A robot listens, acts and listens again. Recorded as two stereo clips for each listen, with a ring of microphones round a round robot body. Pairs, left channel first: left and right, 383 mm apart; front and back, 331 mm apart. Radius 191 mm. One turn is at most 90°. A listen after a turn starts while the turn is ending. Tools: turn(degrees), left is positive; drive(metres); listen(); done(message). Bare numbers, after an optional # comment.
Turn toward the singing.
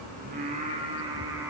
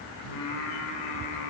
done("Found it: singing, straight ahead.")